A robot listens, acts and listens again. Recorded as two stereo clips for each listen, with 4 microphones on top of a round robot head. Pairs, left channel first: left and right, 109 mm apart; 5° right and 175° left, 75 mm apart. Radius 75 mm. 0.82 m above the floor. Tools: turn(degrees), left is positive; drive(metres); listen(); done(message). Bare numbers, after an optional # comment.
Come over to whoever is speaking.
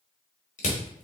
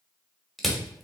listen()
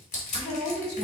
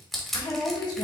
# The woman speaking: 10° left.
turn(10)
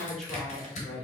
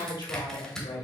drive(1.0)
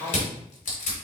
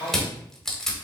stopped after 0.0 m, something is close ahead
# The woman speaking is now 10° left.
turn(10)
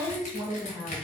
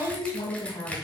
done("Blocked. The woman speaking is further on, straight ahead.")